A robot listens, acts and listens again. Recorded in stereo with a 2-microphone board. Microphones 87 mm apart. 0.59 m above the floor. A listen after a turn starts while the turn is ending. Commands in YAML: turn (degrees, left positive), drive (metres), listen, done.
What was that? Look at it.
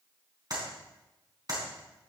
turn: -50
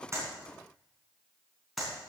done: "Facing the clap."